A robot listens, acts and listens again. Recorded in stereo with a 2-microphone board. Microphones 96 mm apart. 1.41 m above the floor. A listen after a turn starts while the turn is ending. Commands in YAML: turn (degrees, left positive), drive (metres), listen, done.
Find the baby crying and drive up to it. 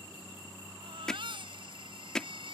turn: -70
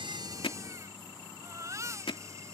turn: -35
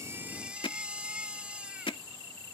turn: -15
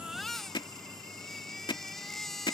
drive: 1.0
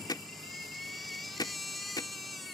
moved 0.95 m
drive: 1.0
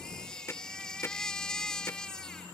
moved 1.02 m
turn: 10
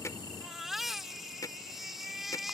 drive: 1.0
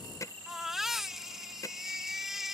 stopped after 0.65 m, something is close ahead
done: "Arrived at the baby crying, straight ahead."